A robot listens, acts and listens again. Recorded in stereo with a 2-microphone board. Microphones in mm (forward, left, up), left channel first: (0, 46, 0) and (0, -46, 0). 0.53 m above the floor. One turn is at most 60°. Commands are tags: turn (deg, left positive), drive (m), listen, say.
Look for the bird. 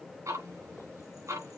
<listen/>
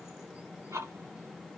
<listen/>
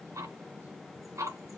<say>I can't make out a bird, only ticking.</say>